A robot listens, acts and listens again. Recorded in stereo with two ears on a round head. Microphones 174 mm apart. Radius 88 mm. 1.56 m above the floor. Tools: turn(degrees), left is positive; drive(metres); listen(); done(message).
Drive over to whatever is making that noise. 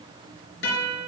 turn(degrees=65)
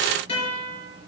turn(degrees=30)
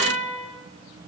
drive(metres=1.0)
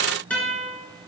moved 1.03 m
drive(metres=1.0)
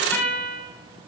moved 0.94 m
turn(degrees=15)
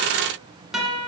drive(metres=1.0)
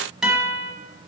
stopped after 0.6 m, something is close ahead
done("Arrived at the guitar, straight ahead.")